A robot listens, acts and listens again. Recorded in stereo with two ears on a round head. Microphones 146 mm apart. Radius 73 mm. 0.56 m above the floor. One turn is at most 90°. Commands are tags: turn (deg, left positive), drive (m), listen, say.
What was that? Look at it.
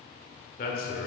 <turn deg="60"/>
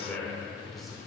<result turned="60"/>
<say>Facing the man speaking.</say>